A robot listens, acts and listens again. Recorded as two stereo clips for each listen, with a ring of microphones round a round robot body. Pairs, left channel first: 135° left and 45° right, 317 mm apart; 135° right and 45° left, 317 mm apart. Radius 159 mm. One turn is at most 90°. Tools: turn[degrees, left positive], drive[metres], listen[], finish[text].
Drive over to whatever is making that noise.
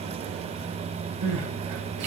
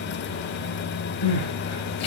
Thought: The crying: 90° right.
Action: turn[-90]
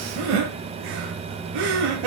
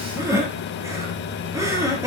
Thought: The crying is now 35° right.
Action: turn[-35]
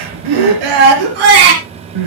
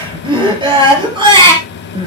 Thought: The crying is now 30° right.
Action: turn[-30]
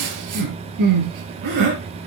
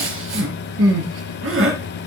Thought: The crying is now 10° right.
Action: turn[-10]
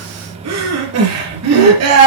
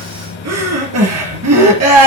Action: drive[1.0]
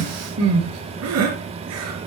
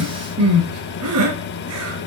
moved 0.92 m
Action: drive[1.0]
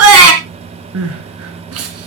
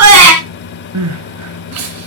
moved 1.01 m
Action: drive[1.0]
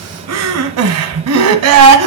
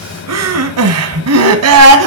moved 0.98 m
Action: drive[1.0]
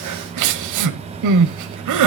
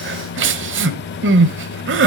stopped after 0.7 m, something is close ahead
Thought: The crying is now 10° right.
Action: turn[-10]
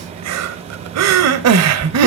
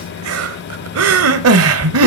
Action: finish[I am next to the crying.]